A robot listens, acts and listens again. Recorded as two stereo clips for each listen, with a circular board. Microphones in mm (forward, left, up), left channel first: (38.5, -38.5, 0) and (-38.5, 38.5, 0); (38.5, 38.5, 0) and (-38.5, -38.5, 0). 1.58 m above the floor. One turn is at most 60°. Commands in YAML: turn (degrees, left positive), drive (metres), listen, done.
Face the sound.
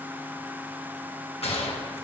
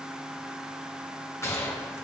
turn: -20
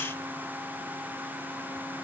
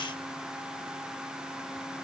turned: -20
done: "I heard a gunshot from this way, but can't make it out now."